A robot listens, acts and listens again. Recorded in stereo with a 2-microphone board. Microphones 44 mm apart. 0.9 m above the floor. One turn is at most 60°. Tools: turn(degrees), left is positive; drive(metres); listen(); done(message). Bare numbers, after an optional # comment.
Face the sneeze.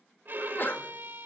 # The sneeze: about 50° left or 130° left.
turn(50)
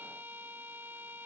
listen()
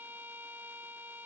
done("I heard a sneeze, but can't make it out now. It was about straight ahead or 80° left.")